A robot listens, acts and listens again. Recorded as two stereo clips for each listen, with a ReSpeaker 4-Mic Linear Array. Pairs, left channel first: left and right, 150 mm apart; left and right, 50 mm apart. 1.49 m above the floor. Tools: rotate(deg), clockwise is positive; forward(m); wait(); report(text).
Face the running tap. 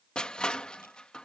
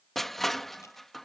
wait()
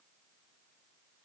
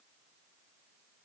wait()
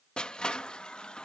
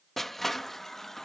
rotate(-30)
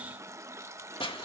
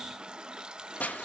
rotate(25)
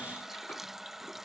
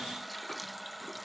report("Facing the running tap.")